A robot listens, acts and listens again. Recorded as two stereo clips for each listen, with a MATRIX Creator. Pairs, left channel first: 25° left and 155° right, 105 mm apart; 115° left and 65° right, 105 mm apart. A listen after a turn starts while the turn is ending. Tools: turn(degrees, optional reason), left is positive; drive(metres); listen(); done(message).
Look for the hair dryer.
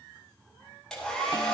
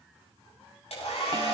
turn(degrees=105, reason="The hair dryer: 105° left.")
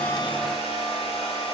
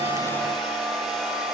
turn(degrees=25, reason="The hair dryer is now 25° left.")
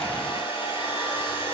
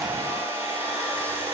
done("Facing the hair dryer.")